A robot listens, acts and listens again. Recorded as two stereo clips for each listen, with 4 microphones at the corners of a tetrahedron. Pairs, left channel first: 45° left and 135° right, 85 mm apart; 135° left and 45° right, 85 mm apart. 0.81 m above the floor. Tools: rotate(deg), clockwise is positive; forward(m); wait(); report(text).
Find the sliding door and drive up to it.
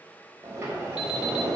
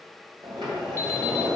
rotate(75)
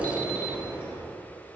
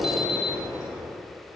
rotate(25)
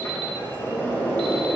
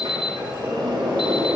rotate(15)
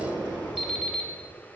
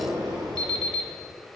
forward(1.0)
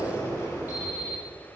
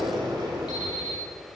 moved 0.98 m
rotate(10)
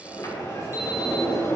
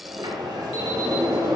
forward(1.0)
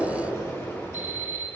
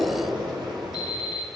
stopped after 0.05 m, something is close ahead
rotate(10)
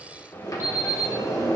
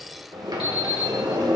report("Arrived at the sliding door, straight ahead.")